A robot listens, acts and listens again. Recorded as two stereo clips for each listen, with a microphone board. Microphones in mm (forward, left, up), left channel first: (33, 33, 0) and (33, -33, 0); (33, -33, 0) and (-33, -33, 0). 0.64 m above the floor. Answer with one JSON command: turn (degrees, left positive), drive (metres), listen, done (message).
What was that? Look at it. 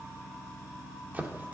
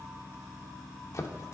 {"turn": -30}
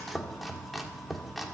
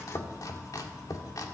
{"done": "Found it: chopping, straight ahead."}